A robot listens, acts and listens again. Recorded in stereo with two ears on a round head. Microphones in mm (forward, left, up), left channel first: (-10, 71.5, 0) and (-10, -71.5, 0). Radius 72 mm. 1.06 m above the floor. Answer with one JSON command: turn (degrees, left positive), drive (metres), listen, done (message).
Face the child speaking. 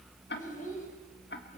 {"turn": 55}
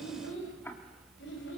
{"turn": 80}
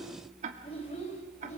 {"turn": 40}
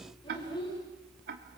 {"turn": 25}
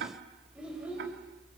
{"done": "Found it: a child speaking, straight ahead."}